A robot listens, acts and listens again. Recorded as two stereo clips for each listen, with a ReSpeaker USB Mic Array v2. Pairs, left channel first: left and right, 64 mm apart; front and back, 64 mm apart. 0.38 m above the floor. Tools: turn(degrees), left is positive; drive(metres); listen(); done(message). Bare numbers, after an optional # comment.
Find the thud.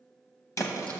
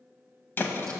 # The thud: 55° left.
turn(55)
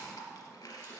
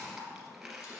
done("Facing where the thud came from. I can't hear it now.")